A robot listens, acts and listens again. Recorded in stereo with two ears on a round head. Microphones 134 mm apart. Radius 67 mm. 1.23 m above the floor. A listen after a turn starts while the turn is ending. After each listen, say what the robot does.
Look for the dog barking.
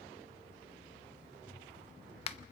Keep listening.
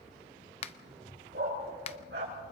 Turn 75° right.
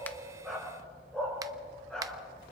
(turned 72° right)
Facing the dog barking, over 4 m away.